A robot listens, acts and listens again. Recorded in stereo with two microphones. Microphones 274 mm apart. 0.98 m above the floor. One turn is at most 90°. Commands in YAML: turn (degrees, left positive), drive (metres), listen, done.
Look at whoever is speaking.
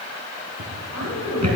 turn: 70
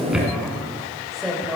done: "Facing the woman speaking, over 4 m away."